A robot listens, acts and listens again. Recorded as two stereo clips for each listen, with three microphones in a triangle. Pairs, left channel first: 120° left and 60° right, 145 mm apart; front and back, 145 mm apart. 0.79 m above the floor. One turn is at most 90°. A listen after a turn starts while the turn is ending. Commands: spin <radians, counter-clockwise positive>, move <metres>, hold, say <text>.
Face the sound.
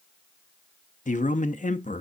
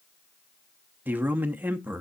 spin 1.57
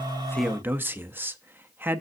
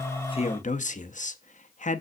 spin 0.26
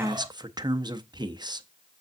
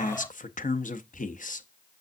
say Facing the man speaking, under 1 m away.